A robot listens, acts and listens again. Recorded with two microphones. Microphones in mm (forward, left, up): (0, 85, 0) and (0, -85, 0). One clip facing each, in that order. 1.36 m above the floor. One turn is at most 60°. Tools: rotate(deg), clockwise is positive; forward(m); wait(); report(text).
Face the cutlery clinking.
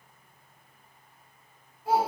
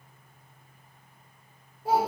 wait()
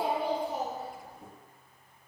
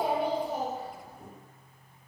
wait()
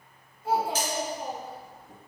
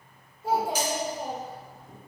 rotate(30)
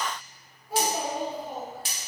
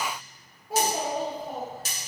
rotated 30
rotate(60)
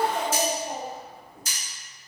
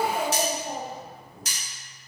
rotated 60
rotate(60)
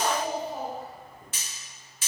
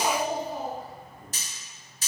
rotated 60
rotate(40)
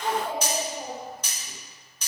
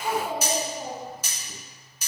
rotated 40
rotate(10)
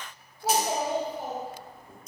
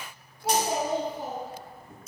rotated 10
report("Facing the cutlery clinking.")